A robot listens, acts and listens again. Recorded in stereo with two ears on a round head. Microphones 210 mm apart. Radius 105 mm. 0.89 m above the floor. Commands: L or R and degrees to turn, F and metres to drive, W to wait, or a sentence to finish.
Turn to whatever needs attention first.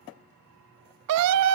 R70
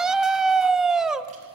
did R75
Found it: a scream, straight ahead, under 1 m away.